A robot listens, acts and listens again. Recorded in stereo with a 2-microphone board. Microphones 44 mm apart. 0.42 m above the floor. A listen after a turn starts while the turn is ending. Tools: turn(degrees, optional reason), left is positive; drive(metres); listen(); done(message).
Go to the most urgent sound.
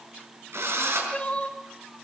turn(degrees=25, reason="The crying: about 25° left or 155° left.")
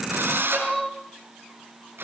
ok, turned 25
drive(metres=1.0)
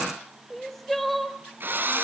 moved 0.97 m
drive(metres=1.0)
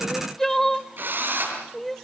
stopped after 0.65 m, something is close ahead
turn(degrees=10, reason="The crying is now 10° left.")
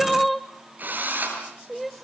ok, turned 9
done("Arrived at the crying, straight ahead.")